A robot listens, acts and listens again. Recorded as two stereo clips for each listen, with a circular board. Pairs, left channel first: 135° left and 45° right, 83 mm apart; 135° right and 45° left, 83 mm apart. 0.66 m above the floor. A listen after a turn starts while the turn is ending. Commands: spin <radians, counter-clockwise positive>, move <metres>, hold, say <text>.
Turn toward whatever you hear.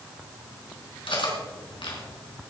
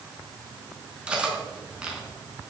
spin 2.09
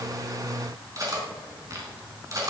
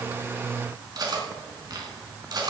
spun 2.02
say Facing the cutlery clinking.